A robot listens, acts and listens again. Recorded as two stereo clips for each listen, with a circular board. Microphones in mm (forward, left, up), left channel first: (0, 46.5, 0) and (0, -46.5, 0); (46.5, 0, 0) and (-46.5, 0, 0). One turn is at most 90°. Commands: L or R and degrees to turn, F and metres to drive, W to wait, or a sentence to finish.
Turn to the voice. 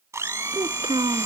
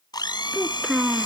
R90
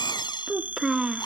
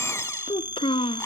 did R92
Facing the child speaking.